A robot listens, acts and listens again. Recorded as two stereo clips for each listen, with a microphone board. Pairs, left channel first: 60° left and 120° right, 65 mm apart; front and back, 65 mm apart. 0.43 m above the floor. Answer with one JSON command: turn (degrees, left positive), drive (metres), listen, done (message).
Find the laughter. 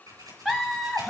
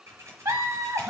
{"turn": 155}
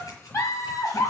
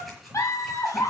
{"turn": 30}
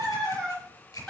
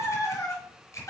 {"turn": -10}
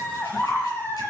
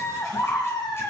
{"done": "Facing the laughter, over 4 m away."}